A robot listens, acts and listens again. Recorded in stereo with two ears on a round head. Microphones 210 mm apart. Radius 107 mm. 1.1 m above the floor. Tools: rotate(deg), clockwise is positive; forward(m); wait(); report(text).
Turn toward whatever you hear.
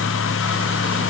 wait()
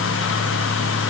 wait()
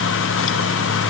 report("I can't make out anything.")